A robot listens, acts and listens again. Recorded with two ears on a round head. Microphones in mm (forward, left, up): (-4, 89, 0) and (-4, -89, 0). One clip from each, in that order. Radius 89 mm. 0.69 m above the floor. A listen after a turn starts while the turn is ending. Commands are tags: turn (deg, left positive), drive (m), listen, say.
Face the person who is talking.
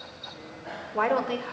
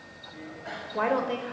<turn deg="20"/>
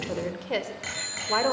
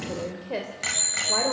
<turn deg="135"/>
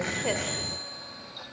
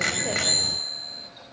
<listen/>
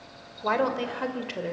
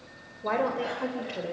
<turn deg="35"/>
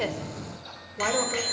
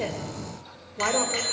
<say>Facing the woman speaking, 2 to 4 m away.</say>